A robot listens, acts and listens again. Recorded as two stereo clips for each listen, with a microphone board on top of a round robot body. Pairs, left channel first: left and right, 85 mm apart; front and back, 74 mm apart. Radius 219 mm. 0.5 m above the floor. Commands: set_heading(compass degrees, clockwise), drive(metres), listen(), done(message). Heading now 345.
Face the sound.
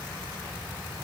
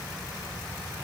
listen()
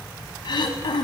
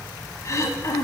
set_heading(290)
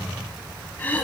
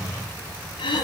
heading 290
set_heading(270)
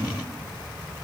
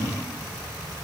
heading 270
listen()
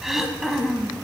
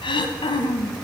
done("Facing the throat clearing.")